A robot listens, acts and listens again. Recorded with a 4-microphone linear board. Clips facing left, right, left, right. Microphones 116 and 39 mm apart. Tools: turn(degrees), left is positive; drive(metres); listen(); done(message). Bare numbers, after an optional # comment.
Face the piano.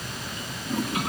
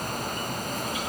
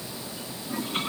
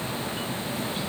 listen()
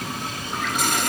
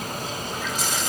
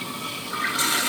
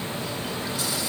listen()
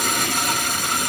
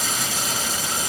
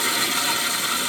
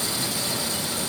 done("I can't make out a piano, only a toilet flushing.")